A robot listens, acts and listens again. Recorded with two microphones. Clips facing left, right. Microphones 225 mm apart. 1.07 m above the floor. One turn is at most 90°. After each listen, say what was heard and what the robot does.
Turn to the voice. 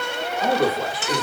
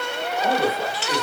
The man speaking: about 50° left or 130° left. Turn 50° left.
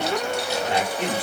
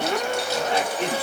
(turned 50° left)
So it is at 20° left. Turn 20° left.
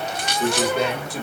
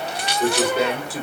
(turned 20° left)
Facing the man speaking, 1 to 2 m away.